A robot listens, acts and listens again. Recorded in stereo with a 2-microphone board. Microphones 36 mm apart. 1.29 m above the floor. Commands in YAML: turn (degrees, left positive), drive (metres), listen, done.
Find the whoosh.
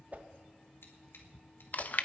turn: -40
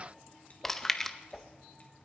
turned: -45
done: "Facing the whoosh, under 1 m away."